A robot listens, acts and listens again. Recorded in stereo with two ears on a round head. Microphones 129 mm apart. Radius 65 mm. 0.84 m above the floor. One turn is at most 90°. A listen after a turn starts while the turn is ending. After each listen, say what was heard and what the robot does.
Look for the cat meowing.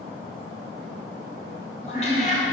The cat meowing: about 50° left or 130° left. Turn 50° left.
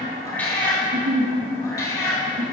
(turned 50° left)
So it is at 25° left. Turn 25° left.
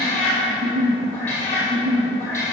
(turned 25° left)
The cat meowing is now 20° left. Turn 20° left.
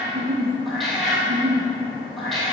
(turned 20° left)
Facing the cat meowing.